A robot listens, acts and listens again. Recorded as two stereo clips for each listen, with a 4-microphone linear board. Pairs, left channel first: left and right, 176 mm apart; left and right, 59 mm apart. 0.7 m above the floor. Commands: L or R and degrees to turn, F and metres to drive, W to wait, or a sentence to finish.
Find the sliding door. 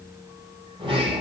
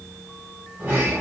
R30
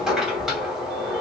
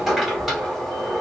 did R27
Facing the sliding door.